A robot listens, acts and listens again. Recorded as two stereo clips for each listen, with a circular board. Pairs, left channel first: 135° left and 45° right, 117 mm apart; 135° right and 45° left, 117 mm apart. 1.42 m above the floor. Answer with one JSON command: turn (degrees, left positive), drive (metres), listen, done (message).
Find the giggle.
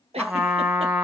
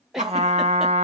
{"turn": -40}
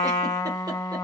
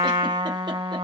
{"listen": true}
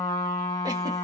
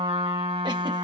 {"listen": true}
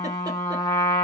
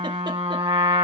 {"done": "Facing where the giggle came from. I can't hear it now."}